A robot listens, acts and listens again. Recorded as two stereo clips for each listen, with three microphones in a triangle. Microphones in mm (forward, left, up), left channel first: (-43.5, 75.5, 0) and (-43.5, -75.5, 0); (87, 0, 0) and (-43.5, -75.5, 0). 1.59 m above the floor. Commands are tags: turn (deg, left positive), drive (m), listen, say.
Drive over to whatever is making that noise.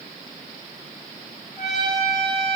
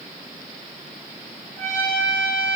<turn deg="-30"/>
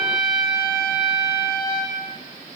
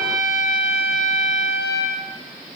<drive m="1.0"/>
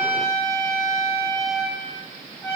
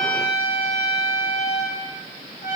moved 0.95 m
<drive m="1.0"/>
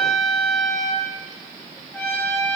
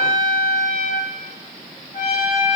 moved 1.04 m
<turn deg="10"/>
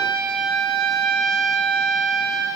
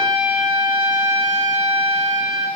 <drive m="1.0"/>
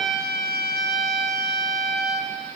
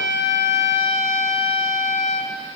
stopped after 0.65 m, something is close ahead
<say>I am next to the trumpet.</say>